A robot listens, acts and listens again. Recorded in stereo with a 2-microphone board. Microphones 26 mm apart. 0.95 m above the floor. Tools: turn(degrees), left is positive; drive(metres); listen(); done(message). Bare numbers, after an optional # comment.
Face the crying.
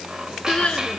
# The crying: about 40° left or 140° left.
turn(40)
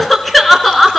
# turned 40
done("Facing the crying, 2 to 4 m away.")